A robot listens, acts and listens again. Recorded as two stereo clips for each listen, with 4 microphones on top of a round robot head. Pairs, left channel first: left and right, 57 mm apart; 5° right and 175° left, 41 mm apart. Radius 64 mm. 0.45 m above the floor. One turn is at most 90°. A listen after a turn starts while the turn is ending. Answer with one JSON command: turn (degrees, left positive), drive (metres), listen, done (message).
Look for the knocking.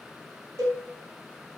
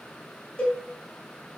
{"listen": true}
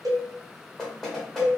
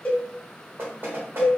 {"turn": 90}
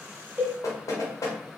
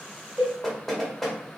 {"turn": 75}
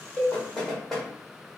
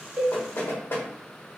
{"done": "Found it: knocking, straight ahead, 1 to 2 m away."}